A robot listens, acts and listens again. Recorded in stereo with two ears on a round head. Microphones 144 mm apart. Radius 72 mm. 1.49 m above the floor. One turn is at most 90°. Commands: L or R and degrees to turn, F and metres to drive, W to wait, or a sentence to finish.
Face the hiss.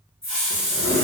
L30
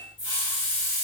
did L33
L90
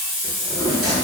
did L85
L55
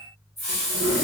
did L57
Facing the hiss, 1 to 2 m away.